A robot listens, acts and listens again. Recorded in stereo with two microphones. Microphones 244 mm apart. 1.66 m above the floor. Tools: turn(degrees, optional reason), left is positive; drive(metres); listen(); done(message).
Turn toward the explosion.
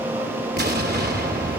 turn(degrees=-40, reason="The explosion: about 40° right or 140° right.")
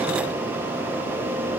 listen()
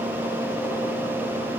done("I heard an explosion, but can't make it out now. It was about straight ahead or 100° right.")